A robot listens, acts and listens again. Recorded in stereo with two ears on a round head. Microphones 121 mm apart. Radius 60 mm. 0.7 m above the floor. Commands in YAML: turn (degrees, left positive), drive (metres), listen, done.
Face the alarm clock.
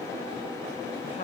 listen: true
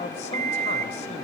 turn: -50
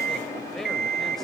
turn: -80
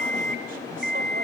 done: "Found it: an alarm clock, straight ahead."